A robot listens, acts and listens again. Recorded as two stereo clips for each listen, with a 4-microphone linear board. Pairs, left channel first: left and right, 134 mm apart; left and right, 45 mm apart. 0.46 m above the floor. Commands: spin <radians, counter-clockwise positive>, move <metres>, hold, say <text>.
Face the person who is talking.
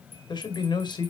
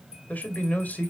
spin 0.61
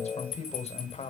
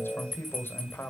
spin 1.83
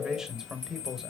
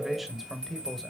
say Found it: a man speaking, straight ahead.